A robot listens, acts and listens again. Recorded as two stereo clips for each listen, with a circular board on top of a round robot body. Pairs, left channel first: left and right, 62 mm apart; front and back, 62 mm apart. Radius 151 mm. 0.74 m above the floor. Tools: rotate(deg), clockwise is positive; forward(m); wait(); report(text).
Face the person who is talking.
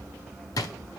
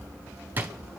wait()
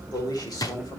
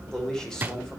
rotate(-80)
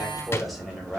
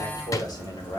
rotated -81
report("Found it: a man speaking, straight ahead.")